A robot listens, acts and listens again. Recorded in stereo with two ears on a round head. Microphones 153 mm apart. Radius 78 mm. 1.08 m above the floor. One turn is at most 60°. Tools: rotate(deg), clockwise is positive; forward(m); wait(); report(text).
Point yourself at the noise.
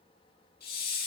rotate(-55)
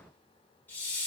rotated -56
rotate(-10)
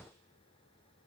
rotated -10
wait()
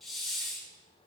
report("Found it: a hiss, straight ahead.")